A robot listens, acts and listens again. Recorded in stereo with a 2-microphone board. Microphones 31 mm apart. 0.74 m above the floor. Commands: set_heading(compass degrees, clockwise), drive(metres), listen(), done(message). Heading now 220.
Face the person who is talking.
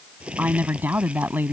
set_heading(290)
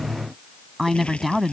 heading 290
done("Found it: a woman speaking, straight ahead.")